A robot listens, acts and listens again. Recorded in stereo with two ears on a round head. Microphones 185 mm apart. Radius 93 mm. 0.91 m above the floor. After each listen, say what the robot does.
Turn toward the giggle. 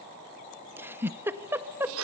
Turn 30° right.
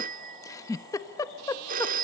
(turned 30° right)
Turn 20° left.
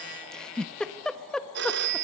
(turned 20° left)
Found it: a giggle, straight ahead.